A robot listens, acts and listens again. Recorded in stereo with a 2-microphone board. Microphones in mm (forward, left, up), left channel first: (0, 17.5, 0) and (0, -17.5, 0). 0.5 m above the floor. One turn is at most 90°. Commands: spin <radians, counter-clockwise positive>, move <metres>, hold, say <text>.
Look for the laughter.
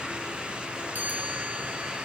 hold
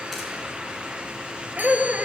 spin -0.70
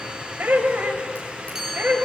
spin -1.57
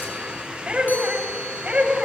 spin -0.61
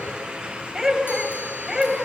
spin -0.17
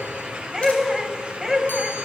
say Facing the laughter.